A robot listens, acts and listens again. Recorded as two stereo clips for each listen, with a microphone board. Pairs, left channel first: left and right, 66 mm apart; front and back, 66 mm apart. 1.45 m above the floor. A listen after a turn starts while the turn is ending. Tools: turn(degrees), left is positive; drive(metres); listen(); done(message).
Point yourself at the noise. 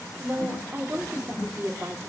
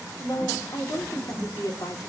turn(degrees=-35)
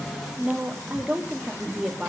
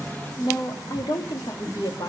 turn(degrees=-10)
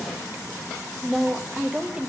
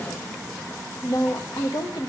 turn(degrees=-15)
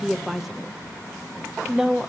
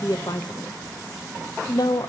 turn(degrees=-10)
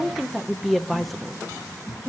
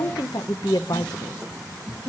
done("Facing the woman speaking, 1 to 2 m away.")